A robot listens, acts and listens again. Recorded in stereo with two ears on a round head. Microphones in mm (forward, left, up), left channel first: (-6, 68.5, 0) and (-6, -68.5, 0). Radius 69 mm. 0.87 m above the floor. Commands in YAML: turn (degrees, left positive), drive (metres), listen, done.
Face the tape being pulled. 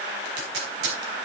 turn: -90
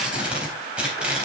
done: "Facing the tape being pulled, 2 to 4 m away."